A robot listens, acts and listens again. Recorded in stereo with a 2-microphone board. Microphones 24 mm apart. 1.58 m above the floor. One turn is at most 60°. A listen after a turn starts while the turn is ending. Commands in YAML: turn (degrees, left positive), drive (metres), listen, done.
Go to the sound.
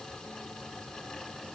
listen: true
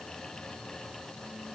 listen: true
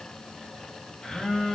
turn: 45
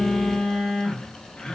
turn: 60
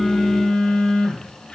turn: 50
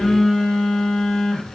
turn: 20
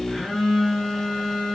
turn: 10
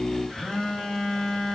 drive: 1.0
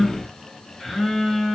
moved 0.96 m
drive: 1.0
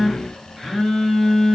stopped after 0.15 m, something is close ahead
done: "Arrived at the phone buzzing, straight ahead."